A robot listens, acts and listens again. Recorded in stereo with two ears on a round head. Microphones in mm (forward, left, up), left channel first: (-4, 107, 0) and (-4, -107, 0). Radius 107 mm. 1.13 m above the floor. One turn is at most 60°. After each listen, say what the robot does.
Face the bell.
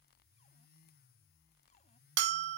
Turn 50° right.
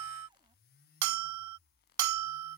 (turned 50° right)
Turn 60° right.
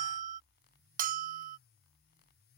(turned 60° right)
Turn 35° right.
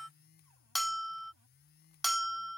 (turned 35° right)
Facing the bell.